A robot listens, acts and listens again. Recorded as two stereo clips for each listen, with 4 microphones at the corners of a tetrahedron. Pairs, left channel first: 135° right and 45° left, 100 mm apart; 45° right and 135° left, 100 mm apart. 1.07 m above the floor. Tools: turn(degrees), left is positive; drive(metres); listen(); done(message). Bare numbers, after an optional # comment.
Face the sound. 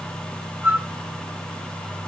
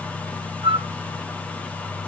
# The flute: 115° left.
turn(115)
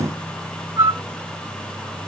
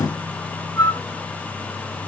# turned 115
done("Found it: a flute, straight ahead, 1 to 2 m away.")